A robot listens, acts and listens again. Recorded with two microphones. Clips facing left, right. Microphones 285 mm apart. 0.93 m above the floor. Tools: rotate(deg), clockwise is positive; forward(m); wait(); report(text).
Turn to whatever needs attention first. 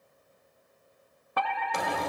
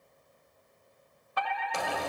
rotate(-65)
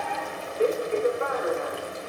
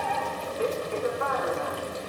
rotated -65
rotate(-25)
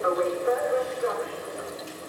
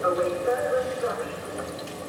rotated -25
report("Facing the fire alarm.")